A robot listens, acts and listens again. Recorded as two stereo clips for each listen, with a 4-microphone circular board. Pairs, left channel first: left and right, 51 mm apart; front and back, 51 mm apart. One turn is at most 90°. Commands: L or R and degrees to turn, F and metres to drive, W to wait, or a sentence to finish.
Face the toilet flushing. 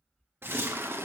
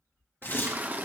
R90
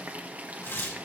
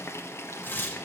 R30
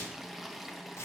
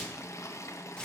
Found it: a toilet flushing, straight ahead.